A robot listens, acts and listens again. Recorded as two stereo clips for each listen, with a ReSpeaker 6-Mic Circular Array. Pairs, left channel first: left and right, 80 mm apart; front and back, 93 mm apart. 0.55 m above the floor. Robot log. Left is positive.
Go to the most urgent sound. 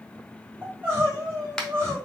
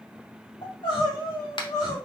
note: The crying: 30° right.
cmd yaw -30
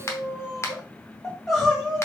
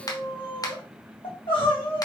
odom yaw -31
cmd fwd 1.0
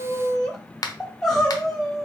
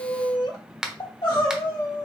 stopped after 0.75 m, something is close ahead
end: I am next to the crying.